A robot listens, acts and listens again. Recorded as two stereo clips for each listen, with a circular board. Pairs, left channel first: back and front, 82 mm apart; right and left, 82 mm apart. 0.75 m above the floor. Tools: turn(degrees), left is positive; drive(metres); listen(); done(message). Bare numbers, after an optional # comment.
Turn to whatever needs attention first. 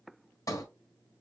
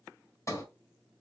listen()
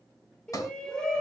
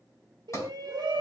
# The shout: 100° left.
turn(100)
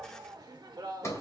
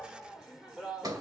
done("Facing the shout, 1 to 2 m away.")